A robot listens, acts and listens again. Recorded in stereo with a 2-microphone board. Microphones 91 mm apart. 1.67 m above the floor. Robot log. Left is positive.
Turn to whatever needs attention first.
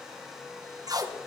cmd idle
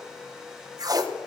cmd idle
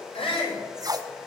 cmd yaw +90
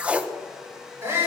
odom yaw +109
note: So it is at 25° right.
cmd yaw -25
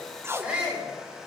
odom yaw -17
note: The shout is now 10° right.
cmd yaw -10
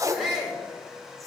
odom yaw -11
end: Facing the shout, over 4 m away.